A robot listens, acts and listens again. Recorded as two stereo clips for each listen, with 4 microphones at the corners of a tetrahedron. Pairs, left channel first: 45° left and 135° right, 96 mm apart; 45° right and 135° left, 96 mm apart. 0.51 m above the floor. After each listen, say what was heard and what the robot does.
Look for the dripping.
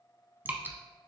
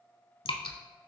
The dripping: 65° right. Turn 65° right.
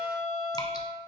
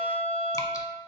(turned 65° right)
Keep listening.
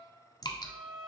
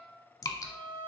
Facing the dripping.